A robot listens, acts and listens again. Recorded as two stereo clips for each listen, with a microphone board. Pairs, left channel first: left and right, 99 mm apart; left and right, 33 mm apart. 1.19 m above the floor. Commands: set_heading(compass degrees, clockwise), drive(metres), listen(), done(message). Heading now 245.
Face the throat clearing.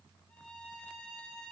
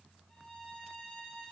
listen()
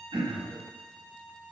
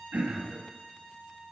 set_heading(310)
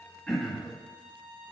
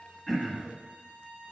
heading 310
done("Found it: throat clearing, straight ahead.")